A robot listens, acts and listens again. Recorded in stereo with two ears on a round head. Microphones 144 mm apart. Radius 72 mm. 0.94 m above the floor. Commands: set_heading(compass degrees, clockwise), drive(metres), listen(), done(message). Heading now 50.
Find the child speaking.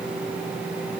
listen()
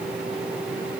listen()
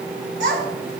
set_heading(115)
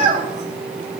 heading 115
set_heading(170)
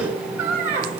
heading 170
set_heading(185)
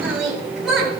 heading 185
done("Found it: a child speaking, straight ahead, over 4 m away.")